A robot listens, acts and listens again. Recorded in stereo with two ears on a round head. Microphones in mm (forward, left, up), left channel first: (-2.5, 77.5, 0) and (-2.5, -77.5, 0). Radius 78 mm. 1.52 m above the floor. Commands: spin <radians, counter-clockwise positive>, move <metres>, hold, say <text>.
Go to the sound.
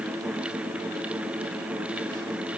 hold
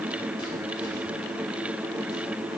hold
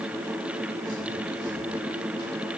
say I can't make out anything to turn to.